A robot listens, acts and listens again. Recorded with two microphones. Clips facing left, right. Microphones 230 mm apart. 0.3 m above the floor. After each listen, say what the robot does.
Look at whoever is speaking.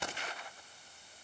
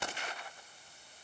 Keep listening.
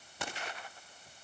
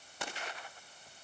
Keep listening.
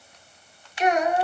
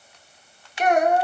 Turn 50° right.
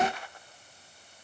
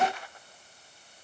Keep listening.
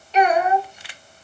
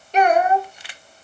Turn 60° right.
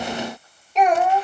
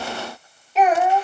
Found it: a child speaking, straight ahead, under 1 m away.